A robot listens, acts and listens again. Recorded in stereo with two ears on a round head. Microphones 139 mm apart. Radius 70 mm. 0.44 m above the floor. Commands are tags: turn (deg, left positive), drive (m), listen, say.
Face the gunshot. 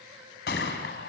<turn deg="70"/>
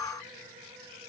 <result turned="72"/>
<listen/>
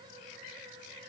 <say>I heard a gunshot, but can't make it out now. It was about straight ahead or 35° left.</say>